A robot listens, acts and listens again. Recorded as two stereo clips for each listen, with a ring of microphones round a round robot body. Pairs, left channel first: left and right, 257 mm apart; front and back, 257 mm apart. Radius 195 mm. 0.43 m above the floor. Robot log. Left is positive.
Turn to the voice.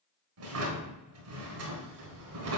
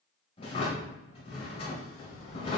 note: The child speaking: 35° right.
cmd yaw -35
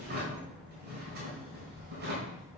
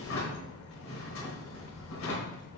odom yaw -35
end: Facing the child speaking.